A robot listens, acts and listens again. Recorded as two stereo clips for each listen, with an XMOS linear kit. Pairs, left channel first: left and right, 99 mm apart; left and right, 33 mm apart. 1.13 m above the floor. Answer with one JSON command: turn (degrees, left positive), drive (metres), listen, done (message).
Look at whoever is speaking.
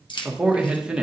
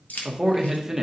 {"turn": -30}
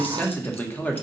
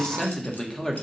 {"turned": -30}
{"turn": 20}
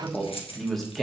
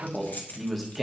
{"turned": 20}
{"done": "Found it: a man speaking, straight ahead."}